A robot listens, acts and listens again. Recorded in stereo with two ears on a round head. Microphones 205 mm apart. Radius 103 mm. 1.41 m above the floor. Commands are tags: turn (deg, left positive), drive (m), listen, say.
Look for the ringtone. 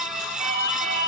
<turn deg="-40"/>
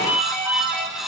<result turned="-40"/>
<say>Found it: a ringtone, straight ahead, over 4 m away.</say>